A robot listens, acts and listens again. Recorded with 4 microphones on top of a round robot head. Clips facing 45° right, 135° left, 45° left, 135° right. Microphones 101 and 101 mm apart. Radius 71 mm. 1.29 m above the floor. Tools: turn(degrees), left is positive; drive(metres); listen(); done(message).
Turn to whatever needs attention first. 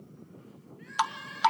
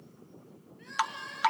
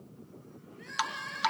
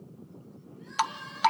turn(degrees=70)
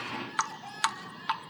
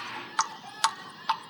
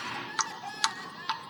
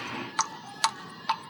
turn(degrees=15)
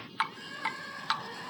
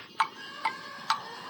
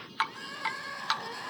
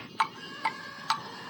done("Facing the crying.")